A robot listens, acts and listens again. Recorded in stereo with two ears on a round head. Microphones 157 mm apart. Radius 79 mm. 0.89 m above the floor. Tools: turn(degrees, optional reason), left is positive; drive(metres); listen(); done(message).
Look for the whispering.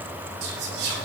turn(degrees=-65, reason="The whispering: about 65° right or 115° right.")
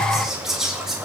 done("Found it: whispering, straight ahead.")